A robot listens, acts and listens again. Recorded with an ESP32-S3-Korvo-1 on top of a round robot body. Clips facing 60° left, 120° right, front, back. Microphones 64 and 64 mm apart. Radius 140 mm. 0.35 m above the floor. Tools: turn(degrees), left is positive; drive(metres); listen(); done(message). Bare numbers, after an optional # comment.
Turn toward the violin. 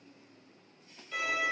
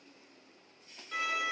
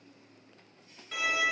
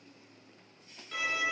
# The violin: 85° right.
turn(-85)
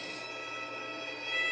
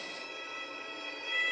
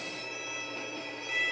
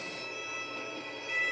done("Facing the violin.")